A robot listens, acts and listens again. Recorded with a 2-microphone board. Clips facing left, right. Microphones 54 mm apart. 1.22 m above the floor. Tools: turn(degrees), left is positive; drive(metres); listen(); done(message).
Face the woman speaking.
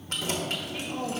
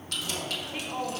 turn(degrees=-20)
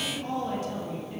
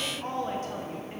turn(degrees=-135)
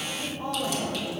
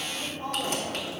turn(degrees=10)
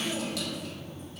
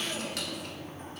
done("Facing the woman speaking.")